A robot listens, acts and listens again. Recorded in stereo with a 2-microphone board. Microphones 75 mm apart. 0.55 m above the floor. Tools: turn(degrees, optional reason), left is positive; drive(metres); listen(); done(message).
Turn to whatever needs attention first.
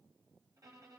listen()
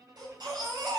turn(degrees=-65, reason="The baby crying: about 65° right or 115° right.")
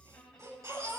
turn(degrees=-45, reason="So it is at 45° right.")
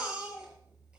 turn(degrees=-15, reason="The baby crying is now 15° right.")
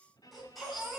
done("Facing the baby crying.")